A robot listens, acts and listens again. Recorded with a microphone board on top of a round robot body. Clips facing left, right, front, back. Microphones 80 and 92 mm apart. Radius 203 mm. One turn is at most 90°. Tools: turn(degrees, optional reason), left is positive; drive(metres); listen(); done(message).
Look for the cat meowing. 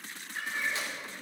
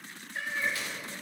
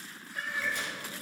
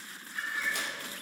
turn(degrees=-50, reason="The cat meowing: 50° right.")
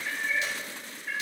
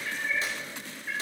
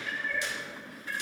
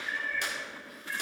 done("Found it: a cat meowing, straight ahead, 2 to 4 m away.")